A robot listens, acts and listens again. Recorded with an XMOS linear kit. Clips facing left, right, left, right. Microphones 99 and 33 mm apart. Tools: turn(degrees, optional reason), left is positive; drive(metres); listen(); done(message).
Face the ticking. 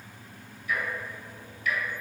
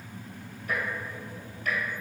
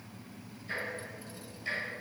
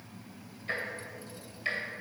turn(degrees=-50, reason="The ticking: about 50° right or 130° right.")
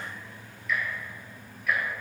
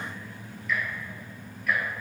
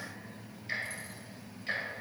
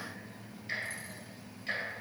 done("Facing the ticking, 2 to 4 m away.")